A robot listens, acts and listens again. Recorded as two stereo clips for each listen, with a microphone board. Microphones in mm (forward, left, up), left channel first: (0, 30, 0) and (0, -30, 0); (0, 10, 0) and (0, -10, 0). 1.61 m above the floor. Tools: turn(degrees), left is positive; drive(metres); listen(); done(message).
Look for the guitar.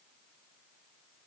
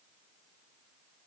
listen()
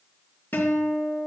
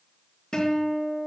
turn(degrees=35)
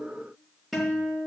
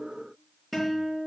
done("Facing the guitar.")